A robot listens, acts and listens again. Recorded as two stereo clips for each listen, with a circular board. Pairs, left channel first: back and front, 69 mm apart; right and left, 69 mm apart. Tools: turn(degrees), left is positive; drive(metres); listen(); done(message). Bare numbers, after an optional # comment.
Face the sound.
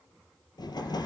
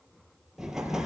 # The explosion: 175° left.
turn(175)
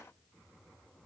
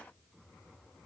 done("Facing where the explosion came from. I can't hear it now.")